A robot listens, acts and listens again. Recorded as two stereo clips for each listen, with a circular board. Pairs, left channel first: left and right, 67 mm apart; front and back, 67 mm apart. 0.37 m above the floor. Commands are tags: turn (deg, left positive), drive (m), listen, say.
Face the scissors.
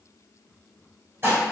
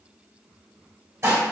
<listen/>
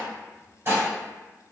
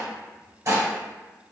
<listen/>
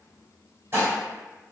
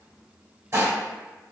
<say>I can't make out scissors, only dishes clattering.</say>